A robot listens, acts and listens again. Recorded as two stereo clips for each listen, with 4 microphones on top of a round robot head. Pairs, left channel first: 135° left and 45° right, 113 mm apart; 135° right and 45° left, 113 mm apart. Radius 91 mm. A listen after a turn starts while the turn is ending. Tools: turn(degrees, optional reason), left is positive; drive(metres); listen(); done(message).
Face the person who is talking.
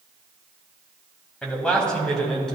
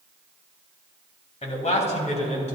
turn(degrees=-140, reason="The man speaking: 140° right.")
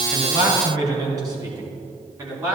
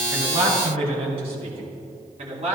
turn(degrees=15, reason="The man speaking is now 15° left.")
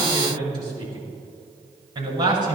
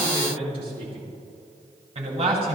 done("Facing the man speaking, over 4 m away.")